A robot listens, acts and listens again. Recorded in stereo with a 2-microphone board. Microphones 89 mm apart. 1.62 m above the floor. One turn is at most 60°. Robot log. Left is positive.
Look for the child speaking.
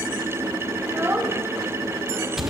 note: The child speaking: about 20° right or 160° right.
cmd yaw -20
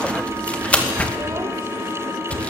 cmd idle
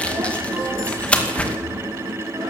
cmd idle
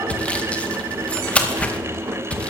end: I heard a child speaking, but can't make it out now. It was about straight ahead or 140° right.